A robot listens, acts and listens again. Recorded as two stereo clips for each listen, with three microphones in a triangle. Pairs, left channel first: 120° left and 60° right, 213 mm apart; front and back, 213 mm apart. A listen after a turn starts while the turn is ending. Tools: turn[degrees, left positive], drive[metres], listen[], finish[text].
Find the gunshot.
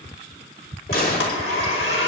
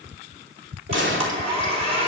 Thought: The gunshot: 160° left.
Action: turn[160]
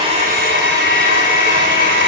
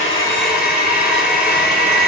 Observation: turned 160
Action: finish[I heard a gunshot from this way, but can't make it out now.]